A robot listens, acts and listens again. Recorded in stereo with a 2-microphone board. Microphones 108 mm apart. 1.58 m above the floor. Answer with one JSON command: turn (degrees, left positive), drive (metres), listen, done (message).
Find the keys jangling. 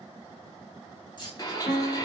{"turn": 40}
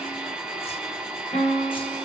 {"listen": true}
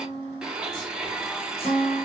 {"listen": true}
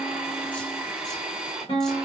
{"done": "I heard keys jangling, but can't make it out now. It was about straight ahead or 100° left."}